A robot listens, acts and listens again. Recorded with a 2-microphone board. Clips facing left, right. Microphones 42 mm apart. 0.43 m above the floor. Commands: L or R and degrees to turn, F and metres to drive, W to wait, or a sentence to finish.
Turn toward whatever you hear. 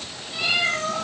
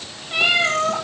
R65
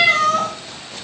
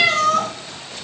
Facing the cat meowing.